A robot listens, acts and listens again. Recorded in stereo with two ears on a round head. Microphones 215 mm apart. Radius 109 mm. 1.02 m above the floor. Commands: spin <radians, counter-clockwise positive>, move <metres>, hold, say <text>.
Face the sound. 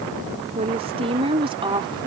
spin -0.35
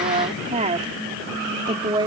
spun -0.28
spin -0.35
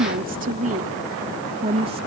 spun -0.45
spin -0.44
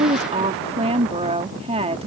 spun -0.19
spin -0.44
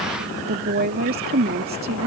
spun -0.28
spin -2.44
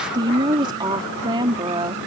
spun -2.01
spin -0.35
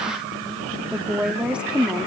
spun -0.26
say Facing the woman speaking.